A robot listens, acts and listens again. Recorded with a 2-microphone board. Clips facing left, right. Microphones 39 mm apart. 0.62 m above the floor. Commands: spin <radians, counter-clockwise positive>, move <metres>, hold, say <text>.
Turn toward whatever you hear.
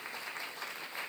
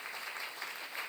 hold
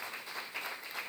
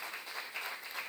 hold
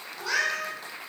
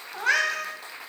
spin -0.87
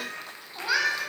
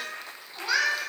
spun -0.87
spin 0.26
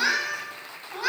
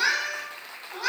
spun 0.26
spin 0.17
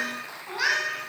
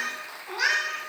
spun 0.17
spin 0.17
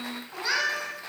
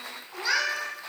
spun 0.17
say Found it: a cat meowing, straight ahead.